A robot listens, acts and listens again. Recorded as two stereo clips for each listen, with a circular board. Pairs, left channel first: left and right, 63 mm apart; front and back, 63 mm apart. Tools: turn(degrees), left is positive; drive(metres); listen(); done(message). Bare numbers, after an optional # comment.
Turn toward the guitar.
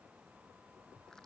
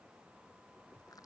listen()
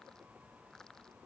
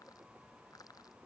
listen()
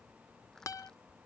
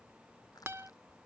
# The guitar: 125° left.
turn(125)
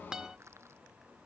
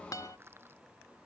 # The guitar is now 15° right.
turn(-15)
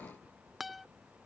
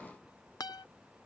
done("Found it: a guitar, straight ahead.")